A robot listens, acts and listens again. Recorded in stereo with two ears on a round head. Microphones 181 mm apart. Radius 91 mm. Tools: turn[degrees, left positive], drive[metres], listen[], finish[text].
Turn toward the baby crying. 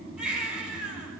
Action: turn[-30]
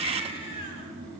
Thought: So it is at 30° left.
Action: turn[30]
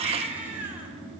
Thought: The baby crying is now 10° right.
Action: turn[-10]
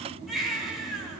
Action: finish[Facing the baby crying, over 4 m away.]